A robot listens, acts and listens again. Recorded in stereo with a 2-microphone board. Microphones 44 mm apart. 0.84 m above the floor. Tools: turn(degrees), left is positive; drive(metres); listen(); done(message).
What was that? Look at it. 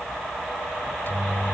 turn(degrees=50)
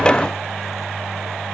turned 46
done("Found it: a microwave, straight ahead.")